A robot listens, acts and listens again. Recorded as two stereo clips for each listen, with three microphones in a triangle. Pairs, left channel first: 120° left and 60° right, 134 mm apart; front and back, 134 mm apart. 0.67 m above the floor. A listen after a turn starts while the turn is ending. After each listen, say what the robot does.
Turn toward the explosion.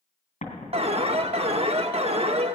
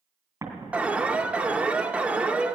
Turn 110° left.
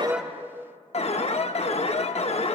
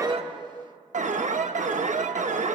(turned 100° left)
Turn 10° left.
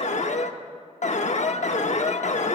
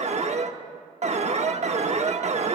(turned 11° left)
Facing where the explosion came from. I can't hear it now.